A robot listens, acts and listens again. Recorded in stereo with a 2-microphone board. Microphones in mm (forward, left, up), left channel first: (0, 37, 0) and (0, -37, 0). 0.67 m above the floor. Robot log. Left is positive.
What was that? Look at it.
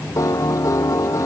note: The piano: about 50° left or 130° left.
cmd yaw +50
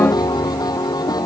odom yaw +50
note: So it is at 75° left.
cmd yaw +75
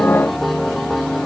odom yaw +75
end: Facing the piano.